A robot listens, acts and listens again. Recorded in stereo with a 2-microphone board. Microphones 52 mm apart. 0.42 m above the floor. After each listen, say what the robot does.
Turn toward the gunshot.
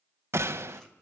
Turn 60° right.
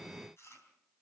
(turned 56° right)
Keep listening.
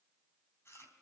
I heard a gunshot, but can't make it out now. It was about 5° right or 65° right.